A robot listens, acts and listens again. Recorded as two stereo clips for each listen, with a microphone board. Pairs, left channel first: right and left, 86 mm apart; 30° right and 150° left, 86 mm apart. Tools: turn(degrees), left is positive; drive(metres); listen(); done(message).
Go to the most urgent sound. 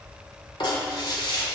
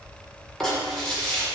listen()
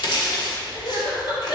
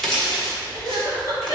turn(degrees=-70)
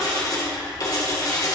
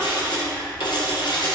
listen()
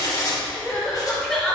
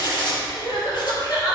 drive(metres=1.0)
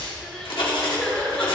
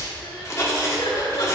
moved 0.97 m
turn(degrees=-10)
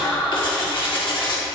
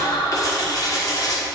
drive(metres=1.0)
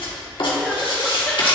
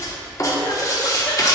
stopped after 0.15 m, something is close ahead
listen()
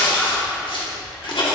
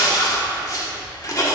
done("Arrived at the crying, straight ahead.")